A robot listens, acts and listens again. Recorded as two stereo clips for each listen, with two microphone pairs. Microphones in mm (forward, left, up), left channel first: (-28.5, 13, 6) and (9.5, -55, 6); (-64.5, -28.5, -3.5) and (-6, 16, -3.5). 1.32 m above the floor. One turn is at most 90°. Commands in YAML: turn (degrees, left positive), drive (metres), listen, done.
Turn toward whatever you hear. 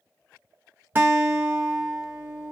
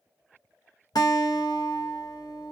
turn: -90
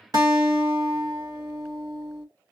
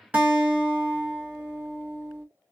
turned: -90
turn: -35
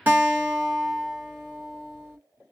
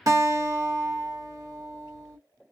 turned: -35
done: "Facing the guitar, 1 to 2 m away."